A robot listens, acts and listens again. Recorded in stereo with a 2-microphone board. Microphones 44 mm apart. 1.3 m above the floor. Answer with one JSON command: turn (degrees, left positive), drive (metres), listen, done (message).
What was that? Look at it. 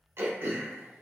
{"turn": -60}
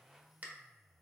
{"turn": -40}
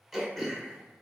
{"done": "Facing the throat clearing, under 1 m away."}